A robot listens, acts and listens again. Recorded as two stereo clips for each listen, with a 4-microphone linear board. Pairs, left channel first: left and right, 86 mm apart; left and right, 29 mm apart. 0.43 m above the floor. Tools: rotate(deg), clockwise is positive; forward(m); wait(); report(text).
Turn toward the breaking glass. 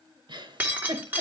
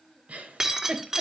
rotate(20)
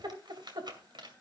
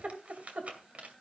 wait()
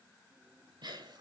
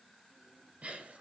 report("I heard breaking glass, but can't make it out now. It was about straight ahead or 140° right.")